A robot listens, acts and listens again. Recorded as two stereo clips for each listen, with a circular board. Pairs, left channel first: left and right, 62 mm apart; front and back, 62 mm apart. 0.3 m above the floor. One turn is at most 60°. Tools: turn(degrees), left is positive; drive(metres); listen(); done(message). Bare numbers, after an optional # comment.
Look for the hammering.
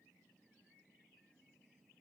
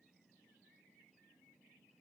listen()
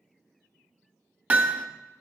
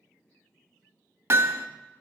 # The hammering: 145° right.
turn(-60)
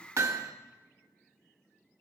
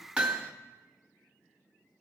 # The hammering is now 110° right.
turn(-60)
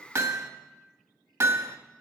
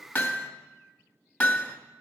# The hammering is now 55° right.
turn(-55)
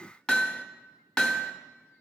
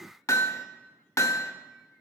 # The hammering is now 15° left.
turn(15)
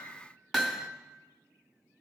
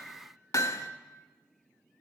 done("Found it: hammering, straight ahead, under 1 m away.")